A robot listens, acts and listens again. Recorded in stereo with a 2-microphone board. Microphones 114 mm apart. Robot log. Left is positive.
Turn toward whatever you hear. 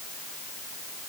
cmd idle
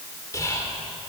note: The whispering: about 30° left or 150° left.
cmd yaw +30
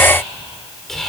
end: Found it: whispering, straight ahead.